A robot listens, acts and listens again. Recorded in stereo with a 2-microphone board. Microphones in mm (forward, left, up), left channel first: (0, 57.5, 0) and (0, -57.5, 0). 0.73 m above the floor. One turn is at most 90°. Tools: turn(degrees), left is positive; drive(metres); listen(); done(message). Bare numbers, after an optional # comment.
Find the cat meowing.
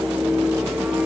listen()
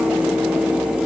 listen()
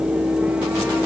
done("I can't make out a cat meowing.")